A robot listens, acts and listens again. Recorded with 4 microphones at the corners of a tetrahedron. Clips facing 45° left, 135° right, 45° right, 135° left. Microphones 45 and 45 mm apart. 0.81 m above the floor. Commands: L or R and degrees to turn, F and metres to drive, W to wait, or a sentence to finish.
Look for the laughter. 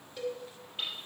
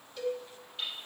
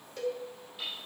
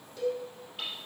W
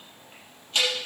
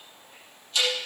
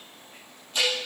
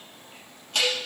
W
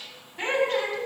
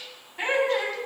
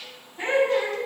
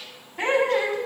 L140
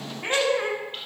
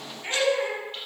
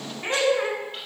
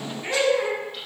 Found it: laughter, straight ahead.